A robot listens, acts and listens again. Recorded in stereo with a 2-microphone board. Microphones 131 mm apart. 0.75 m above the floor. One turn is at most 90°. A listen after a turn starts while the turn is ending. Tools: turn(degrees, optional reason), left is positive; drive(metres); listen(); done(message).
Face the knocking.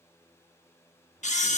listen()
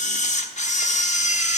listen()
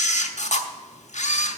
done("I can't make out knocking, only a camera shutter.")